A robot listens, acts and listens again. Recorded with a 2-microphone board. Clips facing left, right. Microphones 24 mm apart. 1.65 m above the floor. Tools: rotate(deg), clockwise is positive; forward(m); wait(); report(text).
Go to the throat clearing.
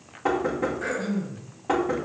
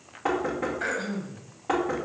rotate(40)
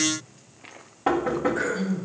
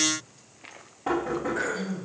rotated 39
forward(1.0)
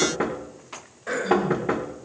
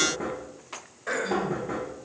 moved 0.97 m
forward(1.0)
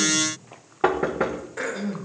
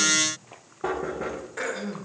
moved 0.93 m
forward(1.0)
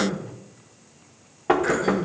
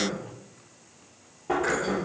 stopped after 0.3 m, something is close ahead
report("Arrived at the throat clearing, straight ahead.")